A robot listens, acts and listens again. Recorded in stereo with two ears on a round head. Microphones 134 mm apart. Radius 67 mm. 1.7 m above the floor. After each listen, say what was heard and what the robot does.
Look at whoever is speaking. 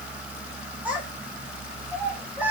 Turn 30° right.
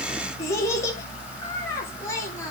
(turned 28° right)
So it is at 20° left. Turn 20° left.
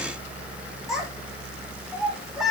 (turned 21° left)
Facing the child speaking.